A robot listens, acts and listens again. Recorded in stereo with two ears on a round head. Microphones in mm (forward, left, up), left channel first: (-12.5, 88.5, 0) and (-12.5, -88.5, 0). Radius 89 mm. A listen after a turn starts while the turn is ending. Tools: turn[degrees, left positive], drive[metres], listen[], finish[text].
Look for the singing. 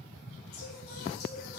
Thought: The singing: about 50° left or 130° left.
Action: turn[50]
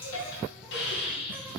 Action: listen[]
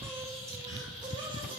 Thought: So it is at 25° right.
Action: turn[-25]
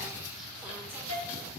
Action: listen[]
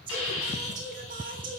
Thought: The singing is now 45° right.
Action: turn[-45]
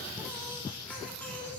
Action: finish[Found it: singing, straight ahead, 1 to 2 m away.]